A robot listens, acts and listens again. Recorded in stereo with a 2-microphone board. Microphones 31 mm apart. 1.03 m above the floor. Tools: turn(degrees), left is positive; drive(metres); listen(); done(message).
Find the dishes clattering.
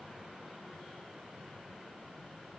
listen()
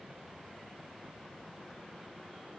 listen()
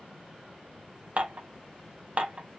turn(degrees=-45)
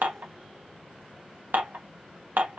turn(degrees=-90)
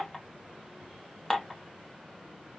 turn(degrees=10)
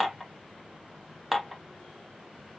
done("Facing the dishes clattering.")